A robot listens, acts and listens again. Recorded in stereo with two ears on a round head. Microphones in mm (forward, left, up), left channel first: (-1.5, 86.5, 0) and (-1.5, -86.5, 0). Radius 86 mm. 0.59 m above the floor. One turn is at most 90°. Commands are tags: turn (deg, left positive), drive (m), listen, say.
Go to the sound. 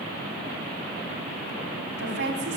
<turn deg="-65"/>
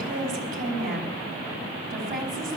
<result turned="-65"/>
<turn deg="-50"/>
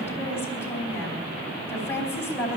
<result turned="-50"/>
<turn deg="15"/>
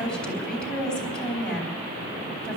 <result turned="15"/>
<drive m="1.0"/>
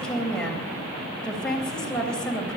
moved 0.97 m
<drive m="1.0"/>
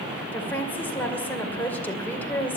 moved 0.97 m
<turn deg="10"/>
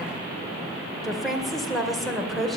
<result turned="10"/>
<drive m="1.0"/>
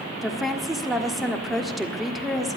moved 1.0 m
<drive m="1.0"/>
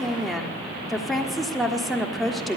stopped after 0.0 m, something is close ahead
<say>Arrived at the woman speaking, straight ahead.</say>